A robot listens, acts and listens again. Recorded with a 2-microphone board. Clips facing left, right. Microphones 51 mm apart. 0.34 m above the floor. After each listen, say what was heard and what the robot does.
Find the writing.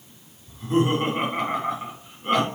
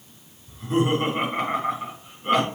Keep listening.
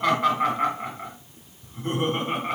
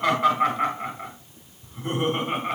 Keep listening.
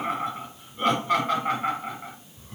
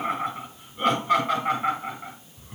I can't make out writing, only laughter.